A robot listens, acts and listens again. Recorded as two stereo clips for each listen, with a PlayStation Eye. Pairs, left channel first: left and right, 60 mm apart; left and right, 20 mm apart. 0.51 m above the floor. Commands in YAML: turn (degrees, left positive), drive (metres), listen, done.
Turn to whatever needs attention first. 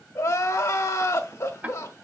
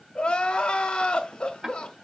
turn: 50
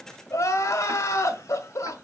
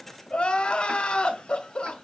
turn: 70
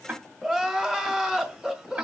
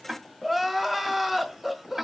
done: "Facing the crying."